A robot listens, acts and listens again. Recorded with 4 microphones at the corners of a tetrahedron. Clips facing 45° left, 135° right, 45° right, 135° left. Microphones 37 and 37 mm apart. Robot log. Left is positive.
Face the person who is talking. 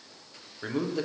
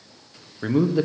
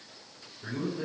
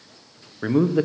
note: The man speaking: 155° left.
cmd yaw +155
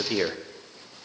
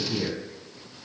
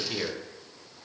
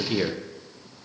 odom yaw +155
note: The man speaking is now 55° left.
cmd yaw +55
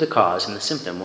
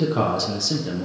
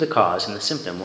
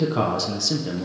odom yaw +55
end: Facing the man speaking.